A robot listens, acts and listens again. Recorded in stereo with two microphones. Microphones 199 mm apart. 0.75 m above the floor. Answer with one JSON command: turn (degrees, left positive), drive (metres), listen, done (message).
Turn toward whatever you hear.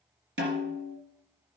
{"turn": -70}
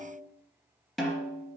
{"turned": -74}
{"done": "Found it: a snare drum, straight ahead."}